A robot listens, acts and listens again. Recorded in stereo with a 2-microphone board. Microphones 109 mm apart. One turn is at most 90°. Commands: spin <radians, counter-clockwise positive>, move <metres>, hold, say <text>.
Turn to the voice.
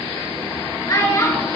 spin 0.52
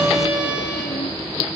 hold
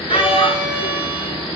spin 1.57
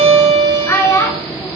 spin 0.52
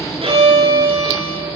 hold
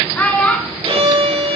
spin 0.26
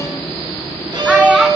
say Found it: a child speaking, straight ahead.